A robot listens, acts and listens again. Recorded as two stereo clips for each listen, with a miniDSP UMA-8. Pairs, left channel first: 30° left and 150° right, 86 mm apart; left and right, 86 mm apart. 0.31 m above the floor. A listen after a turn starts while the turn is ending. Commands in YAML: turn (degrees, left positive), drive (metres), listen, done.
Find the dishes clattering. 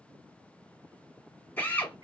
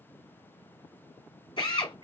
listen: true
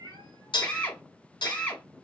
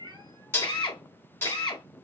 turn: 30
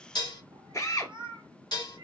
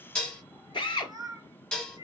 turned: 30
turn: 10
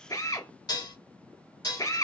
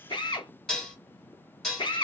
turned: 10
done: "Found it: dishes clattering, straight ahead, 1 to 2 m away."